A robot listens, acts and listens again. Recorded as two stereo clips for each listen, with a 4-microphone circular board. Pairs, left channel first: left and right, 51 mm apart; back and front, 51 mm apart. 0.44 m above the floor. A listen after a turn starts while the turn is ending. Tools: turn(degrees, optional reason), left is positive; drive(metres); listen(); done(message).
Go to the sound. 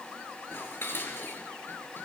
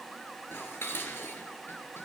turn(degrees=135, reason="The dishes clattering: 135° left.")
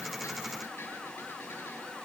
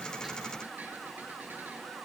listen()
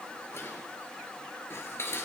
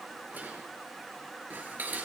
turn(degrees=55, reason="The dishes clattering is now 55° left.")
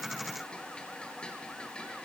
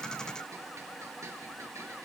turn(degrees=20, reason="The dishes clattering is now 20° left.")
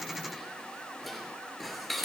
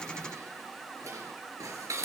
drive(metres=1.0)
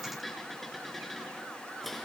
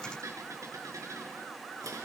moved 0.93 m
drive(metres=1.0)
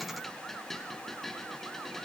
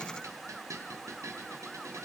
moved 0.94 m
drive(metres=1.0)
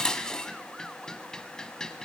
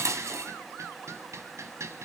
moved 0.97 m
turn(degrees=15, reason="The dishes clattering is now 15° left.")
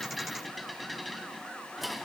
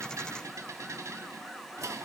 drive(metres=1.0)
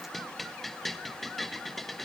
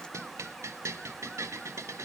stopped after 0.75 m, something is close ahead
done("Arrived at the dishes clattering, straight ahead.")